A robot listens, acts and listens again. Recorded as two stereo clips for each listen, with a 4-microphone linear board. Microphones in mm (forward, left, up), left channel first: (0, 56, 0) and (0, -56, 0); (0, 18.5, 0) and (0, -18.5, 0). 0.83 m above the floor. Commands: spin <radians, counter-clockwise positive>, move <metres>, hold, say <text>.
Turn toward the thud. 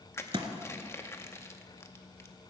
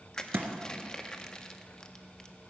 spin -0.87
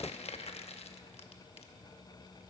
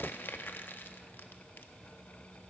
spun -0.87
hold
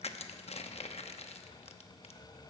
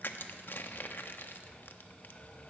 say I heard a thud, but can't make it out now. It was about straight ahead or 80° right.